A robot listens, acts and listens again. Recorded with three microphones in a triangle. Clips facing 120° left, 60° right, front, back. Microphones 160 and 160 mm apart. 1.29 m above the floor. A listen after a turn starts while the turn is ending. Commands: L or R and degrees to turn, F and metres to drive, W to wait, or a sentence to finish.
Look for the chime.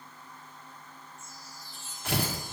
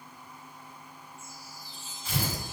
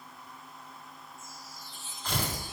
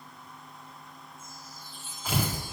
L140
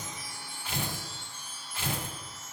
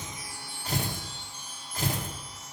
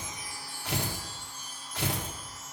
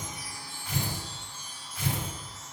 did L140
L35
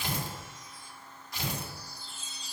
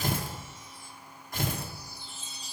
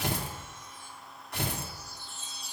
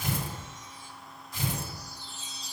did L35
L25
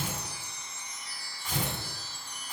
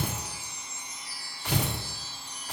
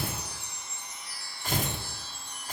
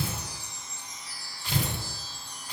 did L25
Facing the chime.